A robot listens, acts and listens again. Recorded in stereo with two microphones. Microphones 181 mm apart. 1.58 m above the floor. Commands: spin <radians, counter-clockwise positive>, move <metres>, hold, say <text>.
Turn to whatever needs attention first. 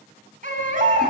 spin -0.79
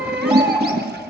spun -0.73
say Found it: a baby crying, straight ahead, over 4 m away.